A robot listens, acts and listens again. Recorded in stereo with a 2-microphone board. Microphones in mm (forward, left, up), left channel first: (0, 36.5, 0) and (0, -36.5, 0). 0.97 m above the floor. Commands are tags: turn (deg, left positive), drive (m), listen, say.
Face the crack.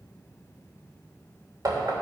<listen/>
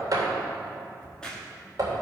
<turn deg="30"/>
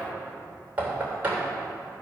<listen/>
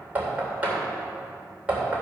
<say>I heard a crack, but can't make it out now. It was about 20° right or 140° left.</say>